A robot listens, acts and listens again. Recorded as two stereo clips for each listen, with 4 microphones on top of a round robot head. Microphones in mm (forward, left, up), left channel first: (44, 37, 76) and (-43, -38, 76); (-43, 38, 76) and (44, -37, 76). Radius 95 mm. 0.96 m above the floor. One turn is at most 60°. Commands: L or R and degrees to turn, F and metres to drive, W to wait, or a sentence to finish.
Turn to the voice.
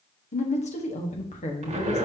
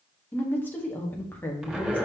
L60
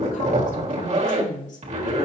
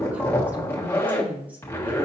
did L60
L40
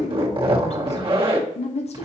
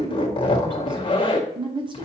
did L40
L10
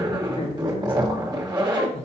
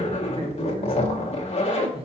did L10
Facing the woman speaking, 1 to 2 m away.